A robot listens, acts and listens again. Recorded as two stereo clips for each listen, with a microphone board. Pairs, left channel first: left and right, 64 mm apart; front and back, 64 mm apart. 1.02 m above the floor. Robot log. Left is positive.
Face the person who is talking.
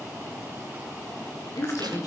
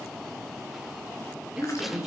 note: The woman speaking: 95° left.
cmd yaw +95
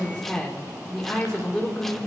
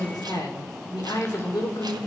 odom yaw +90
end: Facing the woman speaking.